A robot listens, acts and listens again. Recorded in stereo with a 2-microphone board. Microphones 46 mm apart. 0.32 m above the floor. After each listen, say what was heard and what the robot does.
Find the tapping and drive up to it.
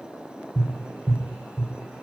The tapping: about 30° right or 150° right. Turn 30° right.
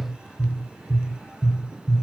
Drive 1.0 m forward.
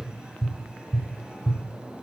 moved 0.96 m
Drive 1.0 m forward.
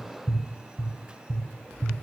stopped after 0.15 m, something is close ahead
I am next to the tapping.